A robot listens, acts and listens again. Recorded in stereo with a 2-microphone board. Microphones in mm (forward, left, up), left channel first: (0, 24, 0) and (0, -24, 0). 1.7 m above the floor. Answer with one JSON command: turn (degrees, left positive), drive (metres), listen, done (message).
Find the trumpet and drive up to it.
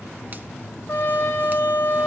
{"turn": 50}
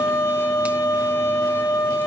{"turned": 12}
{"turn": 115}
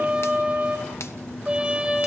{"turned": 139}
{"turn": -20}
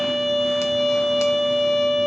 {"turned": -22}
{"drive": 1.0}
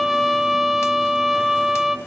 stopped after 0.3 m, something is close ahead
{"done": "Something is in my way. I am facing the trumpet but have not reached it."}